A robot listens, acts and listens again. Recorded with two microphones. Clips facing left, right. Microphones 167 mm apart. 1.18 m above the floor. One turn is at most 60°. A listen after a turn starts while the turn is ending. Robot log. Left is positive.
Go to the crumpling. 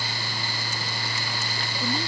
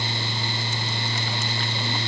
cmd idle
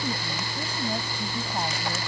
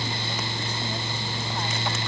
cmd idle
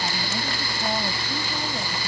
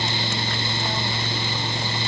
end: I can't make out crumpling to turn to.